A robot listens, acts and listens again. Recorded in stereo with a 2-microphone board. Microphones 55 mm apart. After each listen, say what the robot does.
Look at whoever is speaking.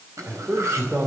Turn 40° right.
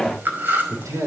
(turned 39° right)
Turn 90° right.
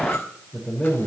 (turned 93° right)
Turn 10° left.
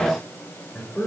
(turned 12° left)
Found it: a man speaking, straight ahead.